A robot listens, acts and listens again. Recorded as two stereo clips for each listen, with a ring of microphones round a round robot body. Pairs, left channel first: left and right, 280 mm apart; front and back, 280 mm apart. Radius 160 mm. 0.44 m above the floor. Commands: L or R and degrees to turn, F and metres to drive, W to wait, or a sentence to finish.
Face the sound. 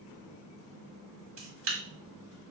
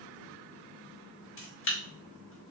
R45
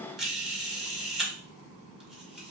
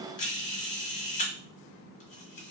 Facing the camera shutter.